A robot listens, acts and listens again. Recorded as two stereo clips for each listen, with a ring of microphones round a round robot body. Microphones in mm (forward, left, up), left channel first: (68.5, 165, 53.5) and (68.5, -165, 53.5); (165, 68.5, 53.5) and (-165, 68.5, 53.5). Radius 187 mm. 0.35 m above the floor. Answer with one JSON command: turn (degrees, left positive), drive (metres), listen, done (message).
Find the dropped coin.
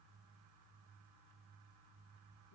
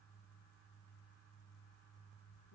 {"listen": true}
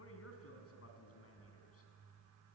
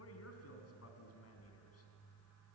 {"listen": true}
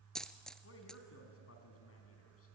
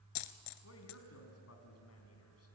{"done": "Found it: a dropped coin, straight ahead."}